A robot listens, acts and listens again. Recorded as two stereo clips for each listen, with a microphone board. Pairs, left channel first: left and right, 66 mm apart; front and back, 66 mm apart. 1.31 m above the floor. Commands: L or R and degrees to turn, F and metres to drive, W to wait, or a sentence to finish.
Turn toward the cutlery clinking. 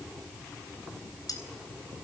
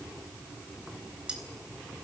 L105
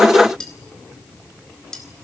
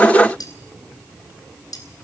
L10
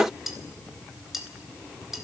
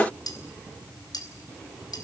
Found it: cutlery clinking, straight ahead, over 4 m away.